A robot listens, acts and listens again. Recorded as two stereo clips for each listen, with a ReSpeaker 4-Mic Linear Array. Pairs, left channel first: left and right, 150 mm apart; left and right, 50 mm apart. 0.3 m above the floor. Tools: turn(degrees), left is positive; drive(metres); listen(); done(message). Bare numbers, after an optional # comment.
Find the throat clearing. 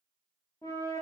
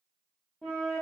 listen()
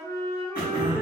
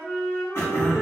# The throat clearing: about 70° left or 110° left.
turn(70)
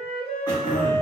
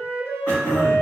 # So it is at 25° left.
turn(25)
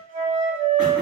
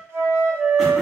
listen()
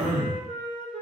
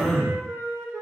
# The throat clearing is now 10° right.
turn(-10)
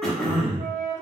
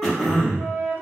done("Found it: throat clearing, straight ahead, 1 to 2 m away.")